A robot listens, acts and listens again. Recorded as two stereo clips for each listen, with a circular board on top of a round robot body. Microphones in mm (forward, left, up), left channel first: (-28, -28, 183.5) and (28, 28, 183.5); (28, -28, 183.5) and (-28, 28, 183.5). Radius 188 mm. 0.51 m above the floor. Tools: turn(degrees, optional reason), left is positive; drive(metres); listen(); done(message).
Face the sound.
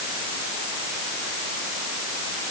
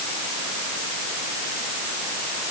listen()
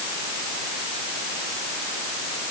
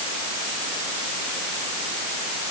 listen()
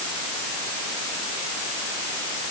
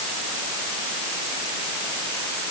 done("I can't make out anything to turn to.")